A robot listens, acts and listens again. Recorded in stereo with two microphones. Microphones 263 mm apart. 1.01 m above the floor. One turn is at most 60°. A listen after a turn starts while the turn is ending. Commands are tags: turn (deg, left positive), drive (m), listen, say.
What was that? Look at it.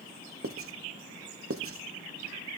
<turn deg="-55"/>
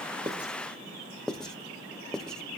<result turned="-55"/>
<say>Facing the writing.</say>